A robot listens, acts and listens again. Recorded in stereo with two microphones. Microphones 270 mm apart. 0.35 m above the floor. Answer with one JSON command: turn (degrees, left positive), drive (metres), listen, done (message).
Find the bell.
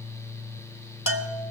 {"turn": 55}
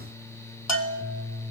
{"turn": 70}
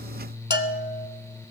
{"turn": 40}
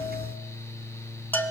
{"done": "Found it: a bell, straight ahead, under 1 m away."}